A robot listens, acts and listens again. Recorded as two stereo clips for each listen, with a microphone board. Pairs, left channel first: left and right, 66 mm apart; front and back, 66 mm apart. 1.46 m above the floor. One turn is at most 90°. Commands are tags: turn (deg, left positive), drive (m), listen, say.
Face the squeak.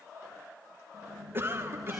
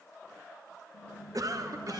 <say>Found it: a squeak, straight ahead, over 4 m away.</say>